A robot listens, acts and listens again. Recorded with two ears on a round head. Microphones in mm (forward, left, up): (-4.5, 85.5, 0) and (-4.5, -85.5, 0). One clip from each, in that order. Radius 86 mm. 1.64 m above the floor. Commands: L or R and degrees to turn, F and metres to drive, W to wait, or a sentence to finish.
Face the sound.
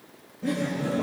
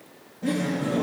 R30
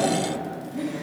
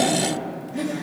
R135
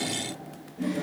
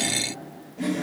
R40
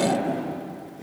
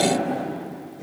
L10
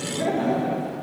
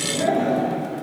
Facing the laughter.